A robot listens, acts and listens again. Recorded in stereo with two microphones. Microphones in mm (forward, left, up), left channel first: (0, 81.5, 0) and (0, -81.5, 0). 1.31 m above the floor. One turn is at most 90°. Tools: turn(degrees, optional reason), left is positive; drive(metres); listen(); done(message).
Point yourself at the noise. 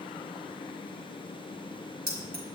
turn(degrees=-75, reason="The keys jangling: about 75° right or 105° right.")
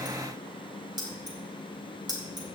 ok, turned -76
turn(degrees=-25, reason="So it is at 25° right.")
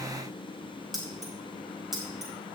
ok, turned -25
done("Found it: keys jangling, straight ahead, over 4 m away.")